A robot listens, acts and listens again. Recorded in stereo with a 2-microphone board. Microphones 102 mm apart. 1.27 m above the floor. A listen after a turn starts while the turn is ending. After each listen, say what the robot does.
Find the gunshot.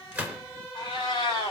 Turn 30° right.
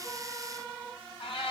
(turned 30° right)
Keep listening.
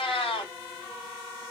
I heard a gunshot, but can't make it out now. It was about 15° left or 135° right.